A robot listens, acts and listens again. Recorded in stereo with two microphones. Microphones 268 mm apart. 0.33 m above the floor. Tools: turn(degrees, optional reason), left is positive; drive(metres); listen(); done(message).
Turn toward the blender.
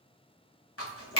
listen()
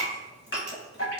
listen()
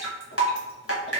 done("I can't make out a blender to turn to.")